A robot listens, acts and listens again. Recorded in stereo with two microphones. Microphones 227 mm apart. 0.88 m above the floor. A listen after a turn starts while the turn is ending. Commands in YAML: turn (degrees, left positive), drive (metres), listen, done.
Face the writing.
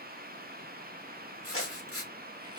turn: 90
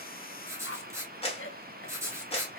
turn: -10
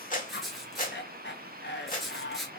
done: "Found it: writing, straight ahead, 1 to 2 m away."